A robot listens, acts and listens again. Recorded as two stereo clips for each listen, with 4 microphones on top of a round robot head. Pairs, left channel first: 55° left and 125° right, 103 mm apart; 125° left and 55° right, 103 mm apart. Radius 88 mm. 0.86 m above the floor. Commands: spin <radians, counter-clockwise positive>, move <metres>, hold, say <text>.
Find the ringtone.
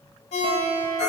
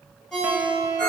spin 0.79
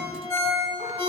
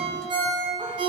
spin -0.26
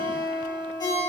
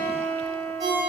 say Found it: a ringtone, straight ahead.